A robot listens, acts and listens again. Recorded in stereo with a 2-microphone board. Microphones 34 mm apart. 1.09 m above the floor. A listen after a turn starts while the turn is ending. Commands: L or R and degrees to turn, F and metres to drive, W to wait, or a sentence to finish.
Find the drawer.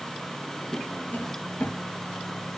L55
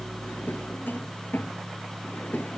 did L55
L70
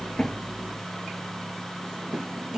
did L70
R20
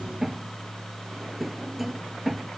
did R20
Facing the drawer.